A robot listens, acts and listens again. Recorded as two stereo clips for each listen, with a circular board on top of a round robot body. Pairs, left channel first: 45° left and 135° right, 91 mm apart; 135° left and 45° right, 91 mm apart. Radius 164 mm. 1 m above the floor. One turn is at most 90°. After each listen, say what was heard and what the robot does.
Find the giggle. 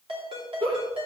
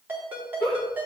The giggle: 150° right. Turn 90° right.
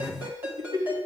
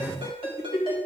The giggle is now 100° right. Turn 90° right.
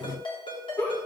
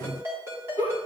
The giggle is now 20° right. Turn 20° right.
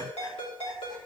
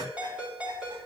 Keep listening.
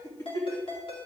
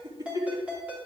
Found it: a giggle, straight ahead, 2 to 4 m away.